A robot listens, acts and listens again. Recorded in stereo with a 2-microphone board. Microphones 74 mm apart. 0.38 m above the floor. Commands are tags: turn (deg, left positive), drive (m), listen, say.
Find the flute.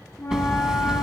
<turn deg="40"/>
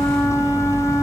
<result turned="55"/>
<turn deg="85"/>
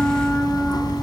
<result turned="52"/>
<turn deg="30"/>
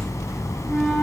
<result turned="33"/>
<listen/>
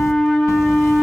<say>Facing the flute.</say>